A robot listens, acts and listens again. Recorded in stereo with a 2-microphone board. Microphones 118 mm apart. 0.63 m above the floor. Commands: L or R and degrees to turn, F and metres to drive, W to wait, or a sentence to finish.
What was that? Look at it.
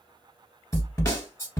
L25
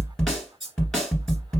Found it: a snare drum, straight ahead, 1 to 2 m away.